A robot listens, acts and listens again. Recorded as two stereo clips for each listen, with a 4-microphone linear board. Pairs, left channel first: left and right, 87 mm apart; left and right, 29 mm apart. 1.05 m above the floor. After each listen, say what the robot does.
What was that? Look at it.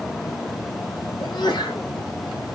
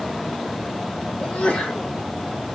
Turn 50° left.
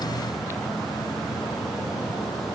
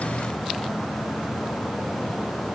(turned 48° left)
Keep listening.
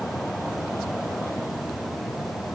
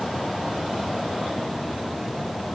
I heard a sneeze, but can't make it out now. It was about 5° left or 80° left.